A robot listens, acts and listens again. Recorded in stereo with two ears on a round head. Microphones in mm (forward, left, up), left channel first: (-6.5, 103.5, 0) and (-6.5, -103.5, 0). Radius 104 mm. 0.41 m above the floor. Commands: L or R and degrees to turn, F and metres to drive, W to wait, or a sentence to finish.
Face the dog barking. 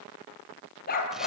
L35
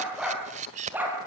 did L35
R10
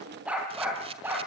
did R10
R10
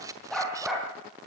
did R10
Facing the dog barking.